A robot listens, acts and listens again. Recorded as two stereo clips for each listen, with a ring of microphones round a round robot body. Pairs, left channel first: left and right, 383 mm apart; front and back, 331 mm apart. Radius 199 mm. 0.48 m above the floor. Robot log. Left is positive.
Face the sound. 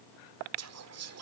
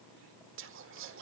note: The whispering: 130° right.
cmd yaw -130
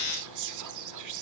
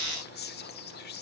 note: The whispering is now 60° right.
cmd yaw -60
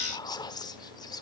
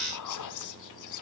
note: The whispering is now 10° left.
cmd yaw +10
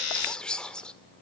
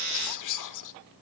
end: Facing the whispering, 1 to 2 m away.